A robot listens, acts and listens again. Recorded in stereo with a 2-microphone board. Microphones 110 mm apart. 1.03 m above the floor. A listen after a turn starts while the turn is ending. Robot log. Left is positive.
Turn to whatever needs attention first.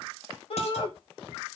note: The shout: about 55° left or 125° left.
cmd yaw +55
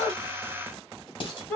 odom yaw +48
note: So it is at 10° left.
cmd yaw +10
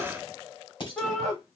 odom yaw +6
end: Found it: a shout, straight ahead, 2 to 4 m away.